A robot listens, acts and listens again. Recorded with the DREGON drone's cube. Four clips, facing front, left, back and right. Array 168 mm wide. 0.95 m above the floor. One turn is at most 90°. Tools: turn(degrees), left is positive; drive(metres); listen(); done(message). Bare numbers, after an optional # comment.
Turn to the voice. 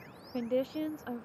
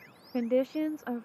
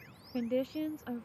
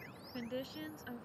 # The woman speaking: 75° left.
turn(75)
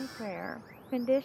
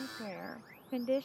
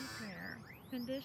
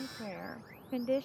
done("Found it: a woman speaking, straight ahead.")